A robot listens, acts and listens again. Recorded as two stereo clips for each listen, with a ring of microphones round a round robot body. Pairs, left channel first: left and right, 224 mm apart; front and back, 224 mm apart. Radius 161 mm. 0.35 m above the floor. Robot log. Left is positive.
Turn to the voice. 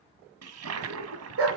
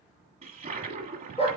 cmd idle
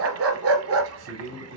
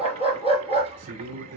note: The man speaking: 130° right.
cmd yaw -130
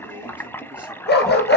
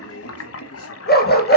cmd idle
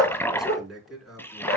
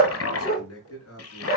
end: Facing the man speaking, over 4 m away.